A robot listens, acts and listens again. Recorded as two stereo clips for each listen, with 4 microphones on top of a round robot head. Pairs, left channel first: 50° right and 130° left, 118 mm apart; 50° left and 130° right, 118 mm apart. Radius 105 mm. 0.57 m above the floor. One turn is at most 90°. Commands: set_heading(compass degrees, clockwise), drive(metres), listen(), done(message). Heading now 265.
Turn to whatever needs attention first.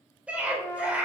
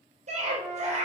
set_heading(355)
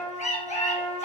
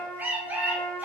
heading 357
set_heading(52)
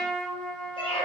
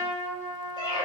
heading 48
done("Found it: a scream, straight ahead, 2 to 4 m away.")